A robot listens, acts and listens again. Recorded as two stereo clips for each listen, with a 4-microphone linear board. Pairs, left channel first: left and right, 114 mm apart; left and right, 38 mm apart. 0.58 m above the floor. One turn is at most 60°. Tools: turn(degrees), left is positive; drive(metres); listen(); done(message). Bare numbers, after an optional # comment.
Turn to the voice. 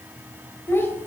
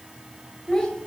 # The child speaking: about 20° left or 160° left.
turn(20)
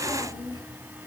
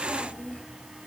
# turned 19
# So it is at 140° left.
turn(60)
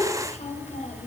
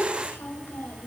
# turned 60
# The child speaking is now 80° left.
turn(60)
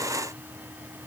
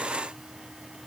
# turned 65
# Nothing new. It was at 15° left.
turn(15)
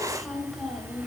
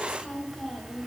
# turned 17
done("Found it: a child speaking, straight ahead, 2 to 4 m away.")